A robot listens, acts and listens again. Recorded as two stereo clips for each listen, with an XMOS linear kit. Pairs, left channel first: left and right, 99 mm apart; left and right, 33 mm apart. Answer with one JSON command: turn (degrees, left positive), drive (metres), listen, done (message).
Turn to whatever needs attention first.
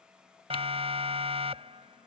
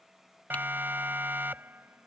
{"turn": -90}
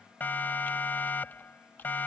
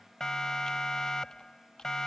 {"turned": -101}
{"turn": 20}
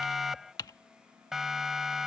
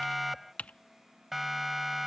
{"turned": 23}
{"done": "Facing the siren."}